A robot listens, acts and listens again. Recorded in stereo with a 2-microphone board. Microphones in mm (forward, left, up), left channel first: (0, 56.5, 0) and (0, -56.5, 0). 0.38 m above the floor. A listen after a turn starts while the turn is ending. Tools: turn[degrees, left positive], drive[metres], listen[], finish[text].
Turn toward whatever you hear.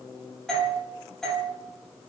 Action: turn[30]
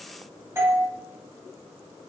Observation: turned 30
Thought: So it is at 25° right.
Action: turn[-25]
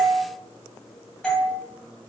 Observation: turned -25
Action: finish[Facing the doorbell.]